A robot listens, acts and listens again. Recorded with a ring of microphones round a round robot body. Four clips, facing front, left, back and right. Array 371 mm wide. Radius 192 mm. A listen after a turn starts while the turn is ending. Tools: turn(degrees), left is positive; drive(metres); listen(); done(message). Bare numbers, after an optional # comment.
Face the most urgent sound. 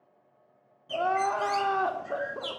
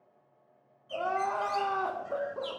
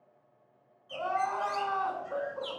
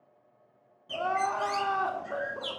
done("Found it: crying, straight ahead.")